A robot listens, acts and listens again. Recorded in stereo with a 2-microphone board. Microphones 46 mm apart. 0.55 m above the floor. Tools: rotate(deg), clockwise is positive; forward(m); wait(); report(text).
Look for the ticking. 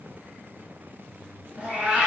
wait()
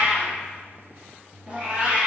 wait()
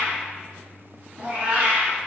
report("I can't make out ticking, only a cat meowing.")